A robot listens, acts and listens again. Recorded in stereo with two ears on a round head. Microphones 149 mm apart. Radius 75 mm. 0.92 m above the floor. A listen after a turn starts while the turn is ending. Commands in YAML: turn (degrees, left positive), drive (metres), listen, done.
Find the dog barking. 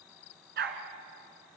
turn: -65
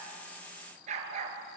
turn: -40
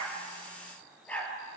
turn: 10
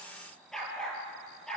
done: "Found it: a dog barking, straight ahead, over 4 m away."